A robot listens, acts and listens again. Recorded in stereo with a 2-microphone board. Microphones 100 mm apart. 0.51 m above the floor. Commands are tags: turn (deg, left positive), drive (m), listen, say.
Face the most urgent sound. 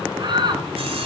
<turn deg="-50"/>
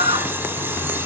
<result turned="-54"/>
<turn deg="-75"/>
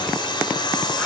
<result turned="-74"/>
<listen/>
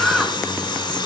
<say>Facing the shout, over 4 m away.</say>